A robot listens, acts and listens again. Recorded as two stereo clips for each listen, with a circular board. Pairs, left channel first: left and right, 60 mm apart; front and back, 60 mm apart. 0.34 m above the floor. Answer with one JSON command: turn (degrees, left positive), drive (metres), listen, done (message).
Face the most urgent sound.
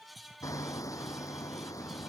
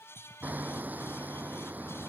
{"listen": true}
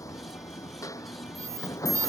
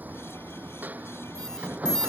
{"turn": -80}
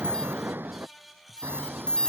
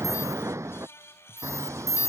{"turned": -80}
{"turn": 15}
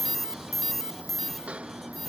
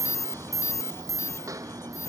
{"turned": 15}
{"done": "Facing the alarm."}